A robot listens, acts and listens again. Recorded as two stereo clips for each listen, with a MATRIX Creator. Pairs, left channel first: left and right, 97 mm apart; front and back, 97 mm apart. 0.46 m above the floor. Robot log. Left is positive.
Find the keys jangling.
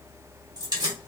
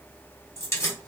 note: The keys jangling: 55° right.
cmd yaw -55
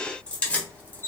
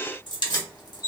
note: The keys jangling is now 25° left.
cmd yaw +25
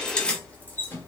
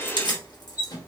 note: The keys jangling is now 30° left.
cmd yaw +30
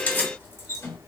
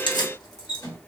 note: The keys jangling is now 40° left.
cmd yaw +40
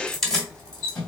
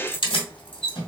note: The keys jangling is now 10° left.
cmd yaw +10
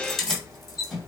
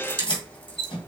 end: Facing the keys jangling, 1 to 2 m away.